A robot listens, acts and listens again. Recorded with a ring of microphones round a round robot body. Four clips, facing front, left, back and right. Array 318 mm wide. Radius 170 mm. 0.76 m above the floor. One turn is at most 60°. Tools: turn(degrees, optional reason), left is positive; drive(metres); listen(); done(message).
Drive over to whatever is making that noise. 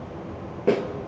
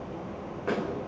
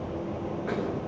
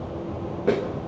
turn(degrees=-35, reason="The snare drum: 35° right.")
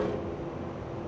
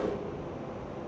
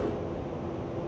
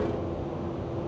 listen()
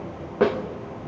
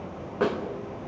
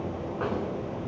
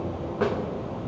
drive(metres=1.0)
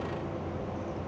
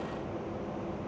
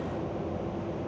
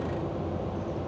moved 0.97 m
listen()
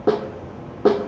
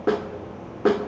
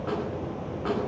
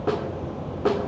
turn(degrees=20, reason="The snare drum is now 20° left.")
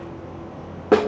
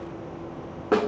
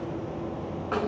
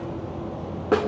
drive(metres=1.0)
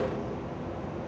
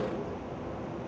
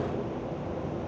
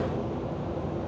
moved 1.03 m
listen()
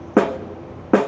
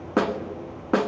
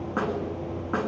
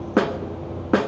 turn(degrees=-10, reason="The snare drum is now 10° right.")
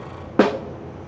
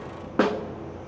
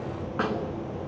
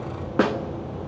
drive(metres=1.0)
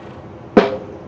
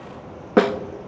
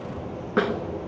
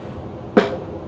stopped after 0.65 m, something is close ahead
done("Arrived at the snare drum, straight ahead.")